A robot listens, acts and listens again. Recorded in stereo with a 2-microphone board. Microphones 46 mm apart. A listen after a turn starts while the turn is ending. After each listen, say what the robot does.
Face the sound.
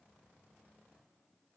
Keep listening.
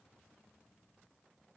Keep listening.
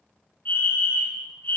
Turn 40° left.
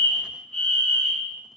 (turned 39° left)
Turn 10° left.
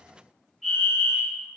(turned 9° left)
Facing the fire alarm.